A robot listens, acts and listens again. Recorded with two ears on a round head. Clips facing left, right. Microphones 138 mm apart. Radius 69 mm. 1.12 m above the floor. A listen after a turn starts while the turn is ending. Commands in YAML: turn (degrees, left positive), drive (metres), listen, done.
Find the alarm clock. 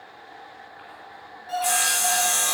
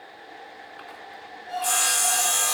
turn: 70
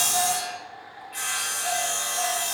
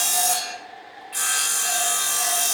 listen: true
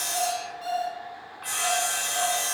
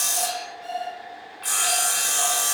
turn: 45
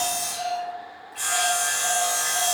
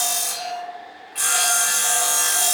done: "Facing the alarm clock, over 4 m away."